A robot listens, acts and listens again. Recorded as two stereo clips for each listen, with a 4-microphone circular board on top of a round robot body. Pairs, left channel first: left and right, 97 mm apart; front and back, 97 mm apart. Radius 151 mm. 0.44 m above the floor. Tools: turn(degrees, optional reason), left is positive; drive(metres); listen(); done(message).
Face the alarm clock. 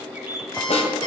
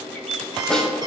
turn(degrees=130, reason="The alarm clock: 130° left.")
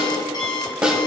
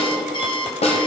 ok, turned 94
turn(degrees=40, reason="The alarm clock is now 40° left.")
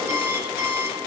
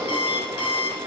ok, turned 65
turn(degrees=-25, reason="The alarm clock is now 25° right.")
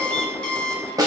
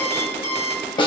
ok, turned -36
turn(degrees=10, reason="The alarm clock is now 10° left.")
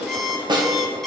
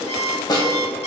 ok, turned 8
done("Facing the alarm clock, 1 to 2 m away.")